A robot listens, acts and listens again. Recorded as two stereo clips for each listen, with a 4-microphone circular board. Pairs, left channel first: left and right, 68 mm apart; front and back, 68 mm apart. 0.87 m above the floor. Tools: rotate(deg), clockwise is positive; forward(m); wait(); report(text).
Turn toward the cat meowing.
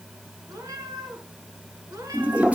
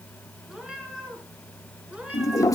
rotate(110)
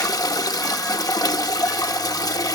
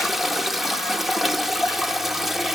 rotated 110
wait()
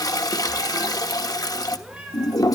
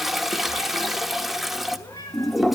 rotate(15)
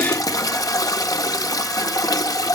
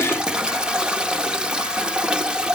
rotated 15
wait()
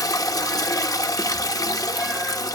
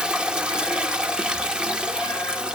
wait()
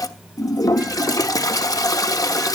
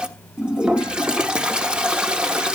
report("I heard a cat meowing from this way, but can't make it out now.")